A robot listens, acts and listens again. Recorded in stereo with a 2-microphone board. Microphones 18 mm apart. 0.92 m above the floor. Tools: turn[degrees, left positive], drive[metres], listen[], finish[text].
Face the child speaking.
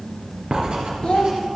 Thought: The child speaking: about 65° left or 115° left.
Action: turn[65]
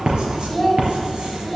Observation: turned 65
Action: finish[Found it: a child speaking, straight ahead.]